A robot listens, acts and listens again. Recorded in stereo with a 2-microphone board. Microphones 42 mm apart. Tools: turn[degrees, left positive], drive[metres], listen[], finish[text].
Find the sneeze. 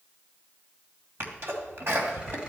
Thought: The sneeze: about 75° right or 105° right.
Action: turn[-75]
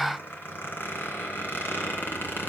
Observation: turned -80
Action: listen[]
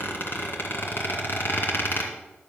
Action: finish[I heard a sneeze, but can't make it out now. It was about 5° left or 25° right.]